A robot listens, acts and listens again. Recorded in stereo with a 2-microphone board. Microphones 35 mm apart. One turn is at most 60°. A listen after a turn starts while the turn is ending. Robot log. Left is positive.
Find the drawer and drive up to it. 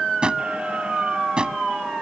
note: The drawer: about 25° right or 155° right.
cmd yaw -25
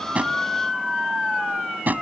note: So it is at 125° right.
cmd yaw -60
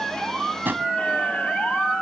note: The drawer is now 65° right.
cmd yaw -60
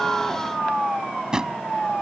note: The drawer is now 20° right.
cmd yaw -20
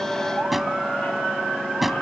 cmd fwd 1.0
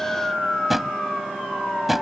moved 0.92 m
cmd fwd 1.0
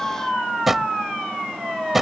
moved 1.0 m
note: The drawer is now 10° right.
cmd yaw -10
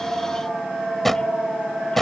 cmd fwd 1.0
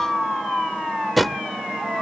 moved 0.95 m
cmd fwd 1.0
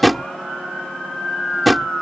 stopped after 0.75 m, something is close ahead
end: I am next to the drawer.